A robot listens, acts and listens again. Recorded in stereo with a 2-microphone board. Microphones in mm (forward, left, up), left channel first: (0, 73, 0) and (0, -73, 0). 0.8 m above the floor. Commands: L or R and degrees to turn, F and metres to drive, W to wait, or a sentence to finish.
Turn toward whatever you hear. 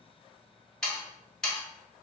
L30
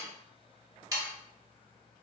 R25
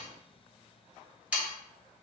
R10
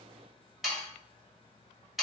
Facing the sawing, 1 to 2 m away.